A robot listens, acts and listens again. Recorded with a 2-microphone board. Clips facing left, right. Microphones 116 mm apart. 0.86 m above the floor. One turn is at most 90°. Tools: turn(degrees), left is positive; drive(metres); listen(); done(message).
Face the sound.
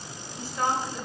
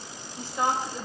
turn(degrees=-20)
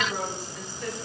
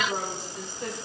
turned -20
turn(degrees=-25)
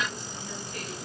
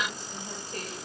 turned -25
listen()
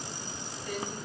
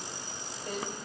turn(degrees=-35)
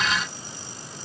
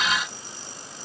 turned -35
listen()
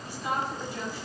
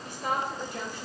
turn(degrees=-90)
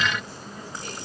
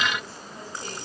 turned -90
turn(degrees=-35)
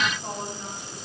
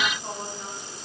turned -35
done("Found it: a woman speaking, straight ahead, over 4 m away.")